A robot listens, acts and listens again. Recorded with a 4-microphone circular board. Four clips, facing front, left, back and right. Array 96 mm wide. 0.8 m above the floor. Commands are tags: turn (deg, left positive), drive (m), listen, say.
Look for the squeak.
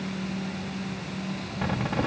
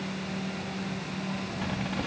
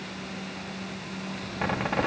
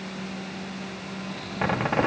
<turn deg="-105"/>
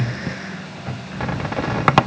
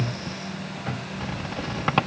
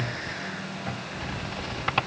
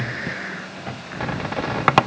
<turn deg="-35"/>
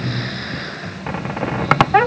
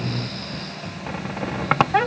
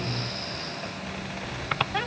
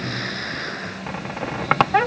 <say>Facing the squeak.</say>